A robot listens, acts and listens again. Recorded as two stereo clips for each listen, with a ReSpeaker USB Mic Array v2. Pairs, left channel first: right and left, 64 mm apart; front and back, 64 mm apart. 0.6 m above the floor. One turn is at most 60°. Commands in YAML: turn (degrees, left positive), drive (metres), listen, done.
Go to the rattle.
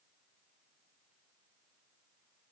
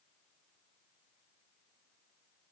listen: true
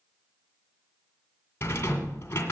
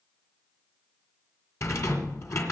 turn: -40
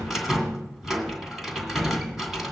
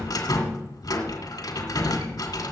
drive: 1.0
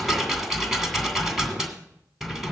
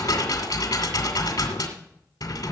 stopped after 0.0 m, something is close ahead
done: "Something is in my way. I am facing the rattle but have not reached it."